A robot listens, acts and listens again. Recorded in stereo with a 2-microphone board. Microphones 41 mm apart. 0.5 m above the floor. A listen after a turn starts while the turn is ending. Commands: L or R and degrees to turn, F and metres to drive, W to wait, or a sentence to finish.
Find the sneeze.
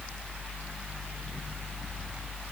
W
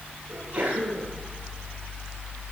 R35
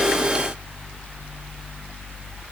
W
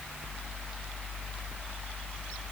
I heard a sneeze, but can't make it out now. It was about straight ahead or 110° right.